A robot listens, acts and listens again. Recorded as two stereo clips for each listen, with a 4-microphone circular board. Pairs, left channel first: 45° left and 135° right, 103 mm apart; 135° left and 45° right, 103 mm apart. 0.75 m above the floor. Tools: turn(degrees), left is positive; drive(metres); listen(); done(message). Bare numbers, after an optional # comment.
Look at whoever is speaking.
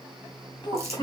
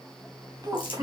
done("Facing the child speaking.")